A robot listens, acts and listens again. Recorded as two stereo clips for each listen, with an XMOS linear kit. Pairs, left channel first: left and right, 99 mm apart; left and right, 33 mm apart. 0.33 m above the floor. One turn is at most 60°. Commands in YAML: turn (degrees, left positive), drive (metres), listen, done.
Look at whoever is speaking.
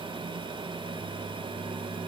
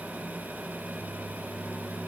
listen: true
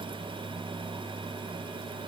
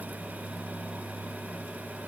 listen: true
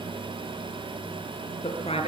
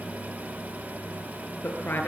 turn: 60
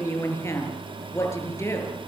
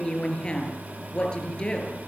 turn: 25
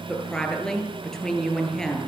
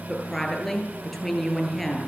done: "Facing the woman speaking, over 4 m away."